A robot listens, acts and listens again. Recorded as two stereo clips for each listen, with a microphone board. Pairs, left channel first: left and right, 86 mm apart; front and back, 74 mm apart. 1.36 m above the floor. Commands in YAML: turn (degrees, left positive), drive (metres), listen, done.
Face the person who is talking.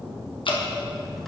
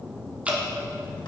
listen: true
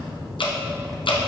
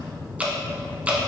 listen: true
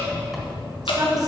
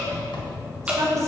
turn: -135
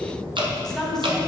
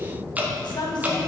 done: "Found it: a woman speaking, straight ahead."